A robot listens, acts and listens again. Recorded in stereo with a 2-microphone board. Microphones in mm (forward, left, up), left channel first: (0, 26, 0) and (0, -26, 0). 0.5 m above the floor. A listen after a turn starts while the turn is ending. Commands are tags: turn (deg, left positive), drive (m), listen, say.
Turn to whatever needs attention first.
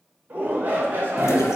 <turn deg="-40"/>
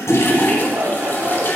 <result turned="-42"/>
<turn deg="-95"/>
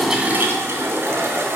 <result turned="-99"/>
<listen/>
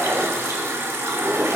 <listen/>
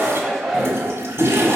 <say>Facing the shout, 1 to 2 m away.</say>